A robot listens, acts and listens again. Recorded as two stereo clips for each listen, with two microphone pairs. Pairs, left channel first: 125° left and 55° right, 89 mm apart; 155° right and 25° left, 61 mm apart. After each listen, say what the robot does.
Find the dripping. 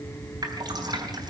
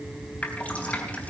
Turn 90° right.
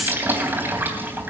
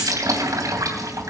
Turn 10° left.
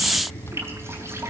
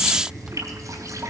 Found it: dripping, straight ahead, 2 to 4 m away.